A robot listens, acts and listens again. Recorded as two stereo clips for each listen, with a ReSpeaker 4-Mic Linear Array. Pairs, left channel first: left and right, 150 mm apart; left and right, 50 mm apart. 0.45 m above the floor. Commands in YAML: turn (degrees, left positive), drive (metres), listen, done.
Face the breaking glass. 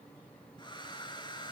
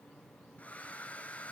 listen: true
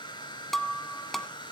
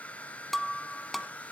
turn: 30
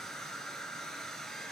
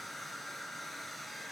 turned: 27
listen: true
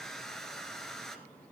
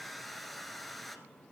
done: "I heard breaking glass, but can't make it out now. It was about 25° right or 150° left."